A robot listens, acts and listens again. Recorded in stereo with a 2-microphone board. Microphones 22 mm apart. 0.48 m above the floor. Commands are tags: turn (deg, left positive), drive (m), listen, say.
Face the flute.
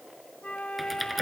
<turn deg="70"/>
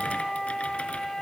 <turn deg="20"/>
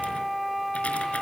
<say>Facing the flute.</say>